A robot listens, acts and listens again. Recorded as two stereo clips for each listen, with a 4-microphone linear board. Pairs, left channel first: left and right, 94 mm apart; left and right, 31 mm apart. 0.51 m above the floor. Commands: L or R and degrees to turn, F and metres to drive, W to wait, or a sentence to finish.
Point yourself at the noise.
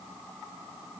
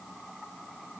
W
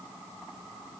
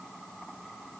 W
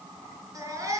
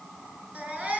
R40
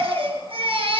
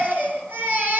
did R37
R105
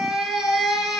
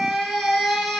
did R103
Facing the baby crying, over 4 m away.